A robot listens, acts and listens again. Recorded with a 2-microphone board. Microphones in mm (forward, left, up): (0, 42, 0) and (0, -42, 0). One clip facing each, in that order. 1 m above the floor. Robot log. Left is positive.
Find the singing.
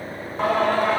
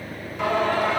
note: The singing: about 40° left or 140° left.
cmd yaw +40
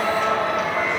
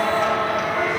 end: Found it: singing, straight ahead.